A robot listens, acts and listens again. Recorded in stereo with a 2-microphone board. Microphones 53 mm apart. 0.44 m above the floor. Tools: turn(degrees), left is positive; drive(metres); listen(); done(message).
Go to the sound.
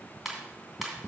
turn(degrees=30)
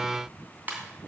turn(degrees=-30)
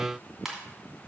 drive(metres=1.0)
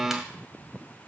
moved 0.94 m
listen()
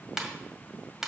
drive(metres=1.0)
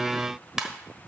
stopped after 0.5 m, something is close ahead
turn(degrees=-10)
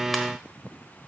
listen()
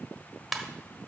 done("Arrived at the ringtone, straight ahead.")